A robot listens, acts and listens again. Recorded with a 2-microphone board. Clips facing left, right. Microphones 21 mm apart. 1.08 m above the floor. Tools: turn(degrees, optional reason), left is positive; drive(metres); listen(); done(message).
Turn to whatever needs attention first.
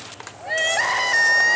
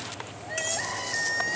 turn(degrees=50, reason="The crying: about 50° left or 130° left.")
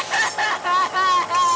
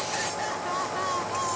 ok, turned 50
turn(degrees=70, reason="So it is at 70° left.")
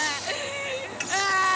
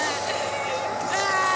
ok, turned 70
done("Found it: crying, straight ahead.")